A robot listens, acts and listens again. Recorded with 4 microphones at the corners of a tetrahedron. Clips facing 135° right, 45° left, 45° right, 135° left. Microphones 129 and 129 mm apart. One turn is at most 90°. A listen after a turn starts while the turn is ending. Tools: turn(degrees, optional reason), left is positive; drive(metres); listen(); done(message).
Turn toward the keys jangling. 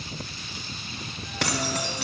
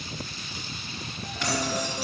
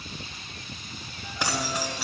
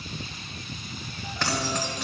turn(degrees=-90, reason="The keys jangling: 130° right.")
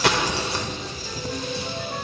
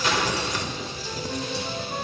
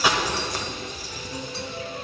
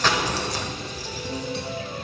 turn(degrees=-80, reason="The keys jangling is now 80° right.")
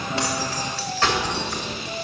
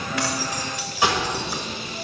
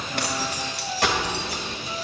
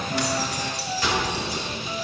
turn(degrees=-40, reason="The keys jangling is now 40° right.")
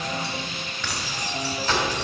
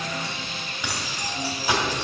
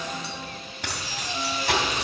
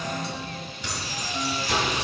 turn(degrees=-35, reason="The keys jangling is now 35° right.")
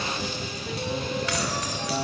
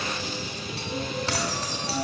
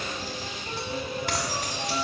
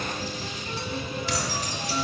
turn(degrees=-15, reason="The keys jangling is now 15° right.")
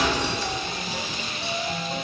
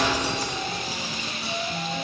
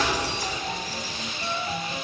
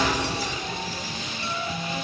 done("Facing the keys jangling, 2 to 4 m away.")